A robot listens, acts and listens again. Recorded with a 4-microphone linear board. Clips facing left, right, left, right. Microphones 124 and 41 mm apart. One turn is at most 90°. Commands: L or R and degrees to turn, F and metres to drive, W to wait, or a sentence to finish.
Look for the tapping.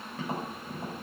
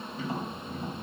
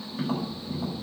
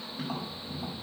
L75
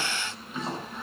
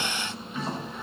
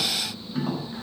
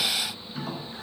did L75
L25
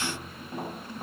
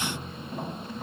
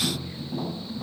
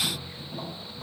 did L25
L10
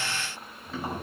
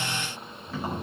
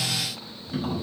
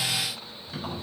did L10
Facing the tapping, over 4 m away.